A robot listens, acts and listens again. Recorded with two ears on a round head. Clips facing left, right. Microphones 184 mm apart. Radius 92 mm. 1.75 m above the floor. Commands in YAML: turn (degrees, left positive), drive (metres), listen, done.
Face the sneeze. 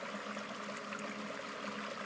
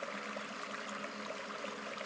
listen: true
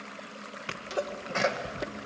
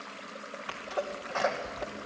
turn: 30
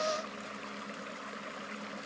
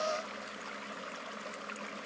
listen: true
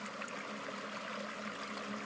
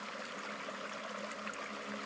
done: "I heard a sneeze, but can't make it out now. It was about straight ahead or 120° left."